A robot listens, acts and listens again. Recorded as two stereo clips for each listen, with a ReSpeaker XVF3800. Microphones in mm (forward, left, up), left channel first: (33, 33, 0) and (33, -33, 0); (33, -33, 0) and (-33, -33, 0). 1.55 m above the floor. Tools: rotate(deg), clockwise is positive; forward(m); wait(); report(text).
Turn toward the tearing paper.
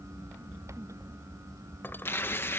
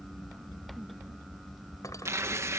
rotate(-140)
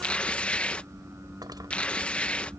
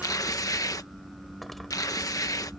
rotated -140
rotate(-20)
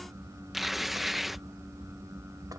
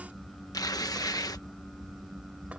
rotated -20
report("Facing the tearing paper.")